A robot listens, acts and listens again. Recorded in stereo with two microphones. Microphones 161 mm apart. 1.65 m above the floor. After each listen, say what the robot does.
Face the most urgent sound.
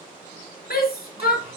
Turn 90° left.
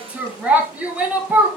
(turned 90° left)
Turn 10° right.
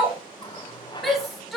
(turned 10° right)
Facing the shout.